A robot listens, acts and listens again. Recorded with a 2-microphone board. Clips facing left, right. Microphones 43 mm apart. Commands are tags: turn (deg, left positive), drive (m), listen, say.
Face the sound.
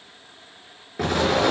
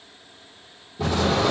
<turn deg="90"/>
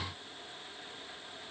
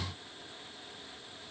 <say>I heard an explosion from this way, but can't make it out now.</say>